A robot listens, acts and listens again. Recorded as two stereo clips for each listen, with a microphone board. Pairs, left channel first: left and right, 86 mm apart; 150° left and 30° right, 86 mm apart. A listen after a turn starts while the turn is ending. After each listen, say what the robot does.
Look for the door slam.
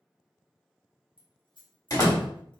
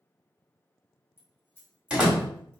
Turn 45° left.
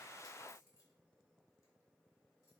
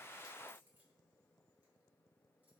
Facing where the door slam came from. I can't hear it now.